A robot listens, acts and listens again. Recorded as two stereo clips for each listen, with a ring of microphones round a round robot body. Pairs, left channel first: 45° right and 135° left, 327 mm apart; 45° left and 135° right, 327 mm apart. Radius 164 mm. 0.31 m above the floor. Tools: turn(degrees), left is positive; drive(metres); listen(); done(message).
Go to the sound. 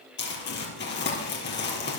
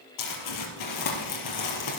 turn(degrees=15)
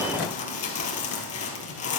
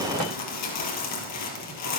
drive(metres=1.0)
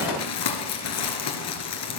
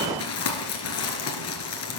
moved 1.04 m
drive(metres=1.0)
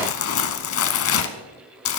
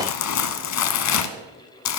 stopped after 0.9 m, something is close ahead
done("Arrived at the crumpling, straight ahead.")